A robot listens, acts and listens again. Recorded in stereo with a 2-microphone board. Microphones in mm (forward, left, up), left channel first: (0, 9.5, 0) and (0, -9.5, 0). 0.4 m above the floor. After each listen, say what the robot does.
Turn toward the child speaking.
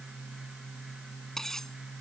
Keep listening.
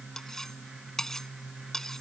Keep listening.
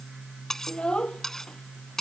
Turn 50° left.
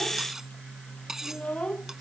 Turn 80° left.
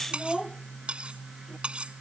Found it: a child speaking, straight ahead.